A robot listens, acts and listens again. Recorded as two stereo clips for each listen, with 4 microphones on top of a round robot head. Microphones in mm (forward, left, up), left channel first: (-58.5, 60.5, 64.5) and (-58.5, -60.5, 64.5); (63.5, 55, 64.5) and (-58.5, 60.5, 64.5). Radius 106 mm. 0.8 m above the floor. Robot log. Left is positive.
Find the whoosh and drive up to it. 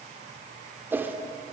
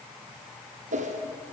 note: The whoosh: 165° right.
cmd yaw -165
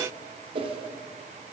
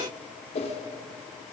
note: The whoosh is now 40° right.
cmd yaw -40
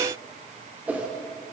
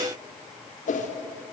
note: The whoosh is now 10° right.
cmd yaw -10
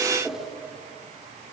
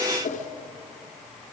cmd fwd 1.0
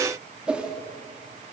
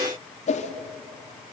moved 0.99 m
note: The whoosh is now 10° right.
cmd yaw -10
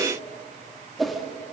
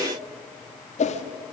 cmd fwd 1.0
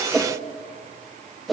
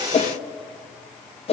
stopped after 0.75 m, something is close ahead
end: Arrived at the whoosh, straight ahead.